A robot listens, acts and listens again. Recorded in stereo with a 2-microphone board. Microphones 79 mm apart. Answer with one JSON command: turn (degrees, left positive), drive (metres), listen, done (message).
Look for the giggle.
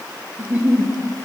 {"turn": -30}
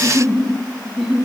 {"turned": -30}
{"done": "Found it: a giggle, straight ahead."}